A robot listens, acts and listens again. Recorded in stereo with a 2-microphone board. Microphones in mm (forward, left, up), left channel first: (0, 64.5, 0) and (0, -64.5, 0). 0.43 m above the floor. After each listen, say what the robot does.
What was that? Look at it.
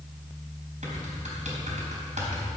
Turn 65° right.
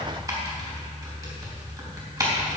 Turn 30° right.
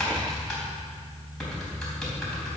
Facing the typing on a keyboard.